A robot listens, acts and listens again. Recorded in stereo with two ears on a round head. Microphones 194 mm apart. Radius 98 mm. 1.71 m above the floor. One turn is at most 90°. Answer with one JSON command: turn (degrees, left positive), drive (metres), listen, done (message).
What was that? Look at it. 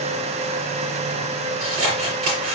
{"turn": -70}
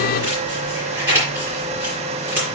{"turn": -10}
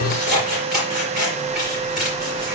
{"done": "Found it: scissors, straight ahead."}